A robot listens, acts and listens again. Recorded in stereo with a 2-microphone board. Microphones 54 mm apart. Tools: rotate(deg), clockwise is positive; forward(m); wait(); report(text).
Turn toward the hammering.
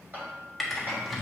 rotate(35)
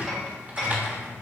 report("Facing the hammering, 2 to 4 m away.")